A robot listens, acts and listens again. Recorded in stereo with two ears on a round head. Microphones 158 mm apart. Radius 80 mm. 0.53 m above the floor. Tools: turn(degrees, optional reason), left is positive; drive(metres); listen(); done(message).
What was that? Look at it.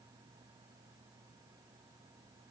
listen()
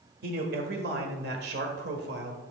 turn(degrees=-65, reason="The man speaking: about 65° right or 115° right.")
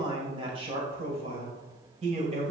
turn(degrees=-40, reason="So it is at 40° right.")
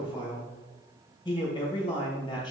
turn(degrees=25, reason="The man speaking is now 25° left.")
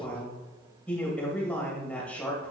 done("Facing the man speaking, 2 to 4 m away.")